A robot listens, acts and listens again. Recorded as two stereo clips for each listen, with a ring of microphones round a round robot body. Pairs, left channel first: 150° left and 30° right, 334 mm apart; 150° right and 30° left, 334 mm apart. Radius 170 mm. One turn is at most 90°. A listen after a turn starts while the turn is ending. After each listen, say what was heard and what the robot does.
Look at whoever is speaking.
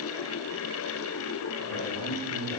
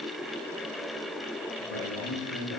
The man speaking: 170° left. Turn 90° left.
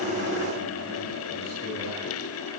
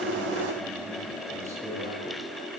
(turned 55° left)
The man speaking is now 110° left. Turn 90° left.
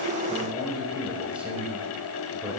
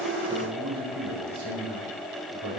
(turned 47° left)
The man speaking is now 55° left. Turn 55° left.
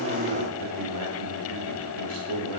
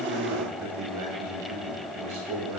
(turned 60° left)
Found it: a man speaking, straight ahead.